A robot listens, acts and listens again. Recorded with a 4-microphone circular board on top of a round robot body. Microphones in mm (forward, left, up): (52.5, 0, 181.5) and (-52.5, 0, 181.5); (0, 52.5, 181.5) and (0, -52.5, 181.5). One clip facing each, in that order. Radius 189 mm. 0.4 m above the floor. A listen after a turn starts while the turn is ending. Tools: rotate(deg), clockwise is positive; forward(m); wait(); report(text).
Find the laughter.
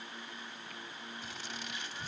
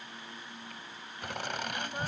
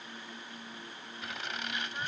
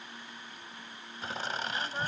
rotate(145)
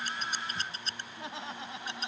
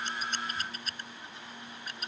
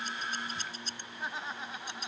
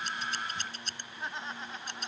report("Found it: laughter, straight ahead.")